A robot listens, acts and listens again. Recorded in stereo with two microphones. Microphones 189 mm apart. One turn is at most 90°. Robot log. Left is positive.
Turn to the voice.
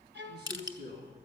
note: The man speaking: about 65° right or 115° right.
cmd yaw -65
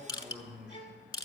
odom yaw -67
end: Facing the man speaking.